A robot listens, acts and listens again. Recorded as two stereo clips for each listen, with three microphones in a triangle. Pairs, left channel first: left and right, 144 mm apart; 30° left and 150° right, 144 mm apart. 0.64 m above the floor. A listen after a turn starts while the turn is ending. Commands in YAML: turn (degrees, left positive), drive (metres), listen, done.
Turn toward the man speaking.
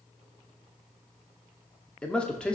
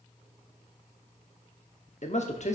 turn: 10
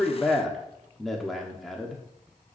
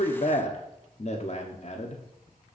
done: "Found it: a man speaking, straight ahead."